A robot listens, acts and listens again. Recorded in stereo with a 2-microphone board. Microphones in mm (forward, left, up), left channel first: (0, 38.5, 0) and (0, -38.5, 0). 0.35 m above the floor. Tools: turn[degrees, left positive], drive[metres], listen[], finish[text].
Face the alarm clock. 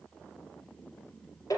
Action: listen[]
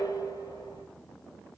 Action: listen[]
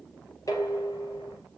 Action: finish[I can't make out an alarm clock, only dishes clattering.]